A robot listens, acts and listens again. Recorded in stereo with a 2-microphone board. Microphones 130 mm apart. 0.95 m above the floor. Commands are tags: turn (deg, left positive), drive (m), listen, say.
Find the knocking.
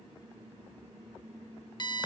<listen/>
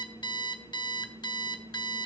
<listen/>
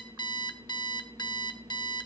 <say>I can't make out knocking, only an alarm clock.</say>